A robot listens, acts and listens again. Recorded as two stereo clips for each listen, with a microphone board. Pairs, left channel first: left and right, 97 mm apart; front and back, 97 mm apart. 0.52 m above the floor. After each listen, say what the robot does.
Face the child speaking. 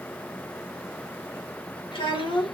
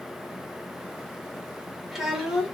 Turn 95° left.
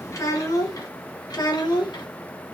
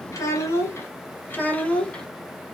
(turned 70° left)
Turn 75° left.
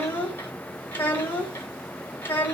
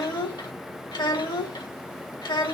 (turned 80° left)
Turn 25° left.
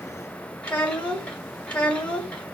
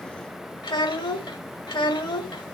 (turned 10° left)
Turn 15° left.
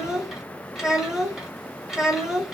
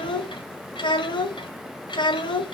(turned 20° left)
Found it: a child speaking, straight ahead, 1 to 2 m away.